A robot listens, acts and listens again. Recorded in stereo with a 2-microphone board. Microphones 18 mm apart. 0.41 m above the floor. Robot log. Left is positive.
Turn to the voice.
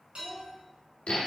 note: The child speaking: about 30° left or 150° left.
cmd yaw +30
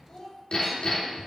note: So it is at 120° left.
cmd yaw +120
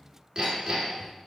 cmd idle
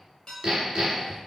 cmd idle
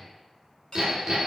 end: Facing where the child speaking came from. I can't hear it now.